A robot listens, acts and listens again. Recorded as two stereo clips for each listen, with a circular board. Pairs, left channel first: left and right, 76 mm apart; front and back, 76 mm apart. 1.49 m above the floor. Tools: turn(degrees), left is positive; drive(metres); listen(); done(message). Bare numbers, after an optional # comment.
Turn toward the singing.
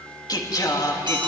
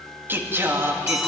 # The singing: 125° left.
turn(125)
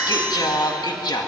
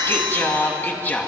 # The singing is now 70° left.
turn(70)
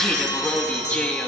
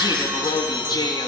# The singing is now 20° left.
turn(20)
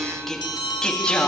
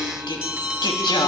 # The singing is now 15° left.
turn(15)
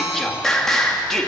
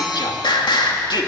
done("Found it: singing, straight ahead.")